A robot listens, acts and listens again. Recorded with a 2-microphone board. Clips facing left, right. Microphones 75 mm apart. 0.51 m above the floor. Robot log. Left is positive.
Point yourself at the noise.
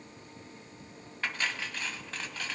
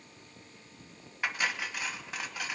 cmd yaw -30
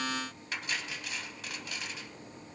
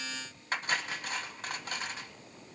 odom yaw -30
note: So it is at 140° right.
cmd yaw -140
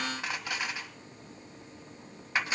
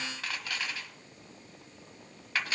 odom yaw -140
note: The cutlery clinking is now 20° left.
cmd yaw +20
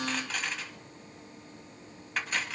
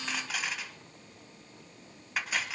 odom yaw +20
end: Found it: cutlery clinking, straight ahead, 1 to 2 m away.